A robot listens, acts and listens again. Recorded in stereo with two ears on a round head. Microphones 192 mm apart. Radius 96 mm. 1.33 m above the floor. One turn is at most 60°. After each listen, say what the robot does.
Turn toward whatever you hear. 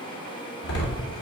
Turn 60° left.
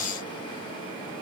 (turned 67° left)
Turn 25° left.
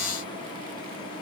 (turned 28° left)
I heard a door slam from this way, but can't make it out now.